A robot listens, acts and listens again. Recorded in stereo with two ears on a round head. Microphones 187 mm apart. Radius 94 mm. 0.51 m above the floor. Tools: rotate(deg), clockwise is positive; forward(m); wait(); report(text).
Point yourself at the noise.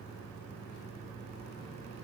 wait()
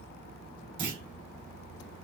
rotate(25)
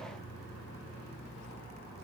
wait()
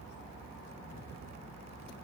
report("I heard a clunk, but can't make it out now. It was about straight ahead or 130° right.")